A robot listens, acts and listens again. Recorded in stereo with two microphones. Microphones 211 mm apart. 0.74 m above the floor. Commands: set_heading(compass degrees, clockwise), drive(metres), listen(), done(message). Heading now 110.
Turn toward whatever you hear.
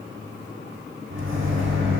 set_heading(180)
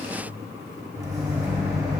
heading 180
set_heading(195)
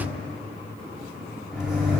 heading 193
done("Found it: a microwave, straight ahead, 1 to 2 m away.")